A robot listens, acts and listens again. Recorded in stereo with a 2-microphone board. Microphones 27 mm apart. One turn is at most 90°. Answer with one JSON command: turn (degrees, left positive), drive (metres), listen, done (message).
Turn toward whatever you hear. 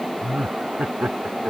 {"turn": -70}
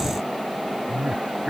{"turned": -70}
{"turn": -35}
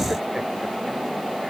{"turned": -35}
{"listen": true}
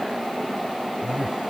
{"listen": true}
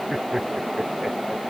{"turn": -10}
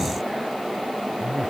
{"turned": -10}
{"listen": true}
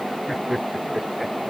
{"done": "Facing the laughter."}